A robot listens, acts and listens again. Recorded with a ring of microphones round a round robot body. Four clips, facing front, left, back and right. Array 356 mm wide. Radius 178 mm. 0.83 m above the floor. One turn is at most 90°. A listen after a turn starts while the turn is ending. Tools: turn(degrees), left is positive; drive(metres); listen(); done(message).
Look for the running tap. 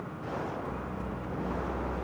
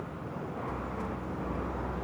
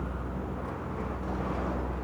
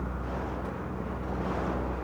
listen()
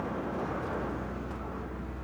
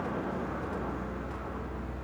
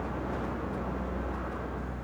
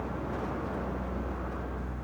listen()
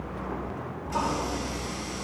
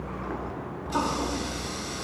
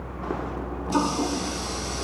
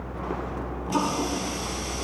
turn(degrees=-90)
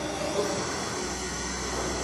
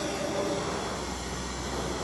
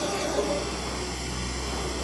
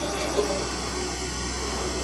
turn(degrees=-75)
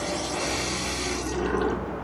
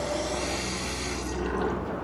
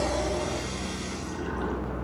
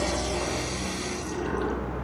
done("Facing the running tap, 1 to 2 m away.")